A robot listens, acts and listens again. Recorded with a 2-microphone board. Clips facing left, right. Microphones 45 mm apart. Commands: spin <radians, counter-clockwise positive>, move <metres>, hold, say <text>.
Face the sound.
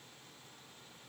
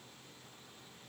hold
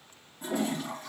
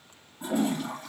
spin -0.61
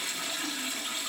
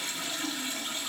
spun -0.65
say Found it: a toilet flushing, straight ahead, 2 to 4 m away.